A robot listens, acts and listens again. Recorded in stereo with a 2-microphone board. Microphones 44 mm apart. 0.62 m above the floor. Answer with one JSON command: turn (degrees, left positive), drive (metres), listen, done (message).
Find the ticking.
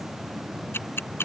{"turn": 60}
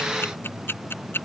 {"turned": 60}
{"turn": 60}
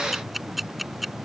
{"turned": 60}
{"done": "Found it: ticking, straight ahead."}